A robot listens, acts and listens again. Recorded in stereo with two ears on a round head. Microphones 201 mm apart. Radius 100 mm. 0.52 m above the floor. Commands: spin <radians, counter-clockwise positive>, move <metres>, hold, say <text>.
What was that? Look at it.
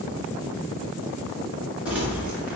spin -0.52
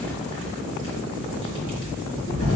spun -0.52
spin 0.44
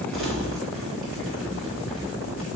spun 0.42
say Found it: crumpling, straight ahead, 2 to 4 m away.